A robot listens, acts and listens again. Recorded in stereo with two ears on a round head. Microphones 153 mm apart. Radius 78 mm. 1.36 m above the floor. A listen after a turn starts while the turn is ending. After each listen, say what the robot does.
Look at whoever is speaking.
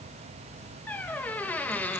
Keep listening.
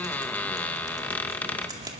Keep listening.
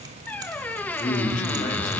Turn 50° left.
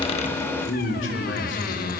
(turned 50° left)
Turn 75° left.
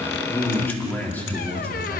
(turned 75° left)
Turn 10° left.
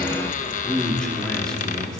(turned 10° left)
Found it: a man speaking, straight ahead.